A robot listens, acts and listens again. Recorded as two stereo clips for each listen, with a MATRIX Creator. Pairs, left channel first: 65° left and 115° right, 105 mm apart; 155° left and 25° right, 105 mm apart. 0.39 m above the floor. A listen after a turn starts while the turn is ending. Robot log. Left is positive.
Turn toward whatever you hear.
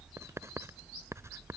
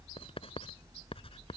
note: The writing: 175° right.
cmd yaw -175
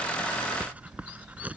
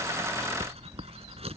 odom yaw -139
note: The writing is now 35° right.
cmd yaw -35
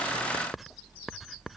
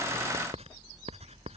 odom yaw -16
note: The writing is now 25° right.
cmd yaw -25
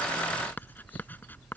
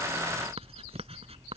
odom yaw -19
end: Found it: writing, straight ahead.